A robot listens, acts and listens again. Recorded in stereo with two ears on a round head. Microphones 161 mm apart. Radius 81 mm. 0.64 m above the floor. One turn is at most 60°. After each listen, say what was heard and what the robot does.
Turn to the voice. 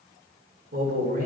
The man speaking: about 50° right or 130° right. Turn 50° right.
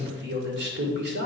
So it is at 80° right. Turn 60° right.
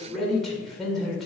Facing the man speaking.